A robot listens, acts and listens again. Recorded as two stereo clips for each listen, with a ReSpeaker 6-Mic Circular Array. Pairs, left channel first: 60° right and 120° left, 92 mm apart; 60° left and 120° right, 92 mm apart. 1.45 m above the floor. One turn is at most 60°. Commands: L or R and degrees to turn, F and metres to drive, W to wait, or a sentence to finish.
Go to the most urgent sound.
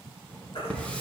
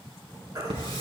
R60
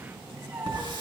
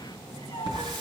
R10
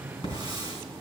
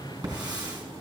W
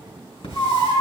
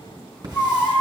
R15
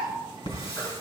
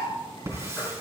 W
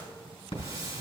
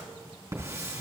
W
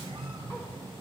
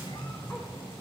Facing where the baby crying came from. I can't hear it now. I did not reach it.